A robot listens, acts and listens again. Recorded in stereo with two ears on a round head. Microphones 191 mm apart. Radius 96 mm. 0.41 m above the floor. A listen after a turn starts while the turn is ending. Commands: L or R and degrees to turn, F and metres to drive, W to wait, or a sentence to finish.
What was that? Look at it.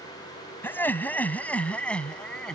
L30
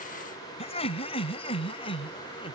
L155
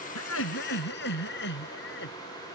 L55
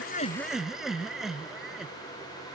Found it: laughter, straight ahead.